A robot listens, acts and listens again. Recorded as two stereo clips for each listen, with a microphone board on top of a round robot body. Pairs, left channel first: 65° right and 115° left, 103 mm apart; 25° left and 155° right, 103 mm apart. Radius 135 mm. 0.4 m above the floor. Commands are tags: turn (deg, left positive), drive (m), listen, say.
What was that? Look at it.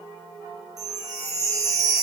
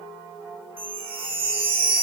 <turn deg="170"/>
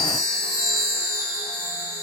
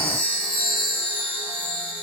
<turn deg="-10"/>
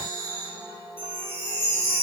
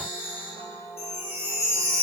<say>Found it: a chime, straight ahead, 1 to 2 m away.</say>